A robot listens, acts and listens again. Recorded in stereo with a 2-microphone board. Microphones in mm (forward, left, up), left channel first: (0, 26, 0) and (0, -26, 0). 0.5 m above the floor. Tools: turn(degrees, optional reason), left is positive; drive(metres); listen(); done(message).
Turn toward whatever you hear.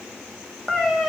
turn(degrees=30)
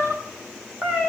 turn(degrees=-20, reason="So it is at 20° right.")
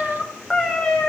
turn(degrees=10, reason="The cat meowing is now 10° left.")
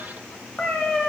done("Found it: a cat meowing, straight ahead.")